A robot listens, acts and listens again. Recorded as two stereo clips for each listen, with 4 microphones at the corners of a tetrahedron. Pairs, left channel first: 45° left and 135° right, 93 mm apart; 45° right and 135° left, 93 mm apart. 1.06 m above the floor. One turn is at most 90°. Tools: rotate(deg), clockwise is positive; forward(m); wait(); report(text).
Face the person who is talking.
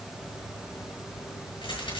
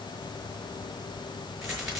wait()
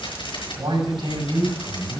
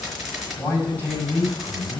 rotate(90)
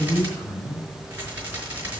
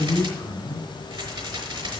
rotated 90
report("Facing the man speaking, over 4 m away.")